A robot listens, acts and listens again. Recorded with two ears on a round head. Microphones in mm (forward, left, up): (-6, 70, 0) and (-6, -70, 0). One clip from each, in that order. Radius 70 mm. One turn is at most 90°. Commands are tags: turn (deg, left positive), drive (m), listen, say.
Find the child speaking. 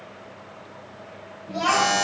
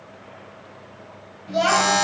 <turn deg="-75"/>
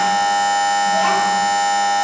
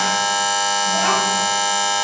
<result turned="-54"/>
<listen/>
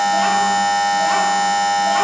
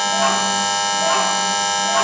<listen/>
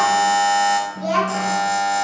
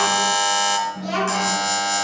<turn deg="15"/>
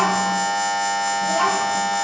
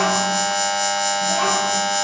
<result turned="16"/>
<listen/>
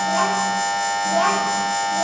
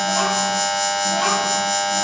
<listen/>
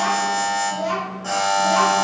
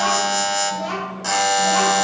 <say>Found it: a child speaking, straight ahead, 2 to 4 m away.</say>